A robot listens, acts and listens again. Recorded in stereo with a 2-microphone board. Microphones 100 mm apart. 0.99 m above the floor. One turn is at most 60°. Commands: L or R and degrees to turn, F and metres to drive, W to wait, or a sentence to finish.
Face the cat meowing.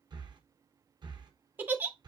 W
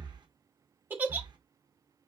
W
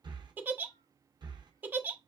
I can't make out a cat meowing to turn to.